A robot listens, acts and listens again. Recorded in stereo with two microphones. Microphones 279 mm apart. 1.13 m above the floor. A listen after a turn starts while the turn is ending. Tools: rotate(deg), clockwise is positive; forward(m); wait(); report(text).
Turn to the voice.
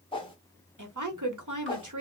rotate(90)
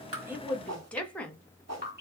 report("Facing the woman speaking.")